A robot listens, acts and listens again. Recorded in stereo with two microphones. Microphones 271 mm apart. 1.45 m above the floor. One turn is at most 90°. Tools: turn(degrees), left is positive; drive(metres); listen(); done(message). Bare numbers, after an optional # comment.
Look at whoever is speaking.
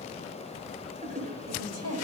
# The woman speaking: about 70° right or 110° right.
turn(-70)
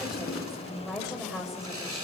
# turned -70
done("Found it: a woman speaking, straight ahead.")